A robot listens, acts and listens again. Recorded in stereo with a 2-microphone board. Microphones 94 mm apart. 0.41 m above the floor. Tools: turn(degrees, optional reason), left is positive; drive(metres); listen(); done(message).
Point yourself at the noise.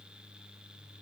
listen()
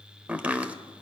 turn(degrees=-30)
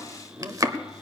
turn(degrees=-130, reason="So it is at 130° right.")
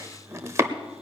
turn(degrees=-40, reason="The chopping is now 40° right.")
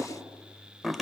done("Found it: chopping, straight ahead.")